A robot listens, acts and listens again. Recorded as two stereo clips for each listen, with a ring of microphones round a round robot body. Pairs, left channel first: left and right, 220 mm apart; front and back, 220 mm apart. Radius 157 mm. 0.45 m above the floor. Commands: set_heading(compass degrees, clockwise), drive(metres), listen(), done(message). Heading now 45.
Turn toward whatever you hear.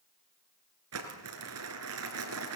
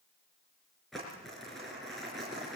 set_heading(135)
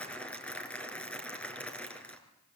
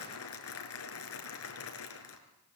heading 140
done("Found it: crumpling, straight ahead, over 4 m away.")